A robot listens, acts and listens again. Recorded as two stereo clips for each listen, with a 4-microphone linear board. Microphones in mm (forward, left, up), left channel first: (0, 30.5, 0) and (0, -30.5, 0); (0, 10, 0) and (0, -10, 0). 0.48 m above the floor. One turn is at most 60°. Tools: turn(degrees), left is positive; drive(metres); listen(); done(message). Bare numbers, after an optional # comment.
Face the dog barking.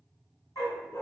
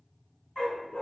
turn(60)
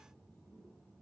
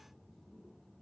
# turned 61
# Nothing new. It was at 30° left.
turn(30)
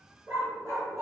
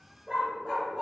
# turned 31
# The dog barking is now 55° right.
turn(-55)
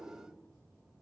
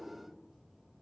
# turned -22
# Nothing new. It was at 30° right.
turn(-30)
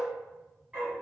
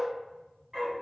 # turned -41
# The dog barking is now 25° right.
turn(-25)
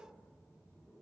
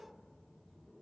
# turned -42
# Nothing new. It was at 20° left.
turn(20)
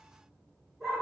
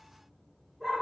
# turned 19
done("Facing the dog barking, 1 to 2 m away.")